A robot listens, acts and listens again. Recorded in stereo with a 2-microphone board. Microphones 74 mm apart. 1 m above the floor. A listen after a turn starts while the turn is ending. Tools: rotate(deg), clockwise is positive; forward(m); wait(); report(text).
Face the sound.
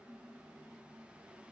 wait()
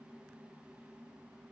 wait()
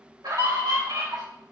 rotate(70)
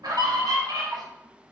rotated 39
rotate(75)
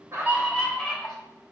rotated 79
report("Found it: a scream, straight ahead, 2 to 4 m away.")